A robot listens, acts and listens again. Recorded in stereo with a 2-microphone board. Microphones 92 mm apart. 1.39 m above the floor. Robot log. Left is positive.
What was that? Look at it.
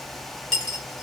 cmd yaw +30
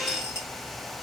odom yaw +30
cmd idle
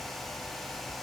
end: I heard a dropped coin, but can't make it out now. It was about 25° right or 145° left.